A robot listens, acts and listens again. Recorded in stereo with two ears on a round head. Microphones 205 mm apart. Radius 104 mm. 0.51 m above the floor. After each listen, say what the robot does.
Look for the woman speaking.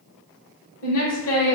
Turn 65° left.
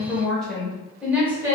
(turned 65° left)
Turn 15° right.
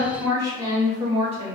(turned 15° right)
Turn 30° right.
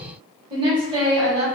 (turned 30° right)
Turn 30° right.
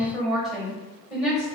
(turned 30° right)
Facing the woman speaking, 1 to 2 m away.